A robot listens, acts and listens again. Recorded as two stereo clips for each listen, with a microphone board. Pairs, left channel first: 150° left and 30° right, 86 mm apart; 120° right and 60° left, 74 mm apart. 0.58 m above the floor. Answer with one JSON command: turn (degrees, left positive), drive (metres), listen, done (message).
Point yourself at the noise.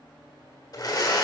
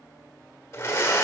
{"turn": -170}
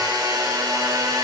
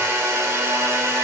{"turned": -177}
{"done": "Found it: a blender, straight ahead."}